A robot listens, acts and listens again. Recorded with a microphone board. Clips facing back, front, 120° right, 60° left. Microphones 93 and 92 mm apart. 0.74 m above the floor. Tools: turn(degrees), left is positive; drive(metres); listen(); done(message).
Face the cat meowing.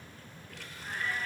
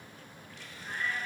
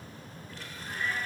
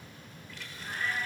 turn(degrees=110)
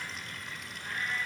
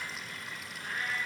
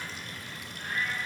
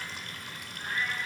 done("Found it: a cat meowing, straight ahead, over 4 m away.")